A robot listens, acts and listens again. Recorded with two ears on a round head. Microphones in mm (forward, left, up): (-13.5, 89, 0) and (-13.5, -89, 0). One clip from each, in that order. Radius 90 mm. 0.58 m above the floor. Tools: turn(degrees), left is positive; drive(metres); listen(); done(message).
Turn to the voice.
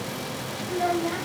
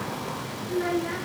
turn(degrees=-30)
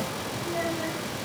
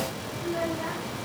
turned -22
listen()
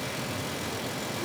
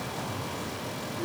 listen()
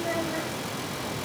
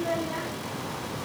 turn(degrees=-145)
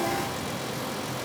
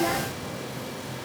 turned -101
turn(degrees=-45)
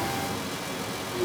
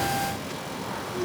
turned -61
turn(degrees=20)
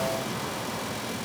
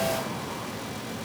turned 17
listen()
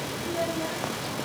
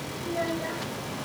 done("Found it: a child speaking, straight ahead.")